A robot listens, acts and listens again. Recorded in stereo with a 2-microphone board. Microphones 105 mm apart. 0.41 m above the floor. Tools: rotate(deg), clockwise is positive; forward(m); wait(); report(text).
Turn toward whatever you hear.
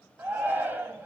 rotate(20)
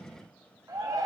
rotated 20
rotate(140)
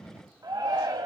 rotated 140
rotate(45)
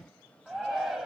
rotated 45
report("Facing the shout, 2 to 4 m away.")